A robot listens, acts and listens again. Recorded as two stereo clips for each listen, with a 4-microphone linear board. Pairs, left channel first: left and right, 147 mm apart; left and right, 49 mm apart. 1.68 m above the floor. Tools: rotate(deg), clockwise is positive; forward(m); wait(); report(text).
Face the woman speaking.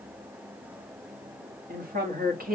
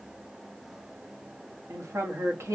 rotate(90)
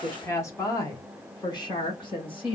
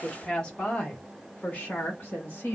rotate(-35)
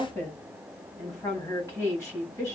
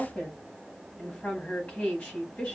rotate(-20)
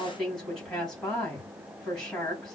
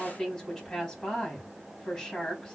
report("Facing the woman speaking.")